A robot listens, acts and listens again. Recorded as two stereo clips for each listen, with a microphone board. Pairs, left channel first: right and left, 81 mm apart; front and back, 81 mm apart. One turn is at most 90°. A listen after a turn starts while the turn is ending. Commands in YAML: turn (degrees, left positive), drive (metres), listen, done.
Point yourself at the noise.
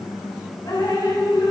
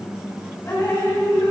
turn: -50
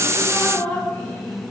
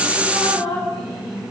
turn: -15
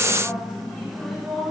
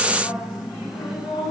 done: "Found it: dripping, straight ahead, 2 to 4 m away."